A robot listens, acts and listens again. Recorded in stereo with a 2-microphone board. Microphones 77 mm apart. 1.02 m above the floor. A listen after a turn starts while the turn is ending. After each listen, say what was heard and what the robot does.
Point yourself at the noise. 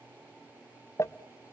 The crumpling: about 35° left or 145° left. Turn 35° left.
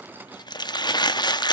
So it is at 110° left. Turn 110° left.
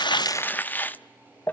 The crumpling is now 25° left. Turn 25° left.
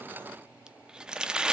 The crumpling is now 10° right. Turn 10° right.
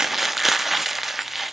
Found it: crumpling, straight ahead, under 1 m away.